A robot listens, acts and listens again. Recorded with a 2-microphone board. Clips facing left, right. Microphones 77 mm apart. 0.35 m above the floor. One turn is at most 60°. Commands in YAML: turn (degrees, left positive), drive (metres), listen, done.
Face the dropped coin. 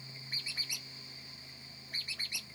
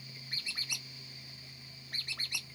listen: true
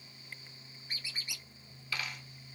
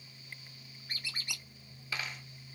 turn: -25
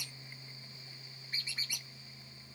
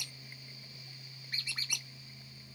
listen: true
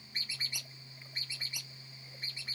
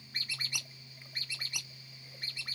done: "I heard a dropped coin, but can't make it out now. It was about straight ahead or 130° right."